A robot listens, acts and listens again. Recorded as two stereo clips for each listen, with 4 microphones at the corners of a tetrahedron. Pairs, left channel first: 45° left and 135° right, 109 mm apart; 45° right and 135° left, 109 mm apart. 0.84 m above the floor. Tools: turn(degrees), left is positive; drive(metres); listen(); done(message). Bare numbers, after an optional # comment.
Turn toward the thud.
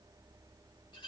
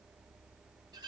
listen()
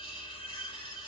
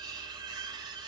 listen()
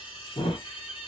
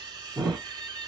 # The thud: 45° left.
turn(45)
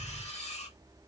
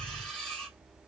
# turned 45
done("Facing where the thud came from. I can't hear it now.")